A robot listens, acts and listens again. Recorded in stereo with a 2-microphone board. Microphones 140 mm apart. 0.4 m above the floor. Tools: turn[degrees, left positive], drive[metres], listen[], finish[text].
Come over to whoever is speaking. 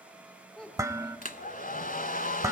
Action: turn[30]
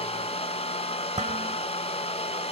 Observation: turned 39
Action: listen[]
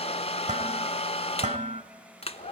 Action: listen[]
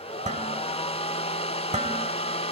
Action: finish[I heard a child speaking, but can't make it out now. It was about 35° right or 140° left. I did not reach it.]